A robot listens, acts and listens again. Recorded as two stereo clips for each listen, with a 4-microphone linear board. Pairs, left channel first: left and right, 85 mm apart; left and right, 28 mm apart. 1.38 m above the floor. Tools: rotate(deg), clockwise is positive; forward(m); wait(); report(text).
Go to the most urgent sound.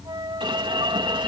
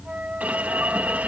rotate(70)
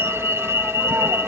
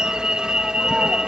rotate(35)
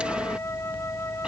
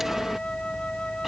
wait()
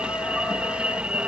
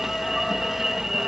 rotate(15)
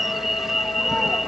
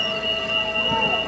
forward(1.0)
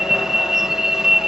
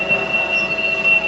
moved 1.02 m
forward(1.0)
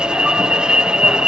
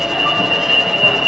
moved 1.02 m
rotate(15)
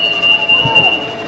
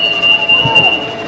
forward(1.0)
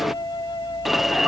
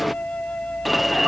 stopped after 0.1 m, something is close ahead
report("Arrived at the alarm, straight ahead.")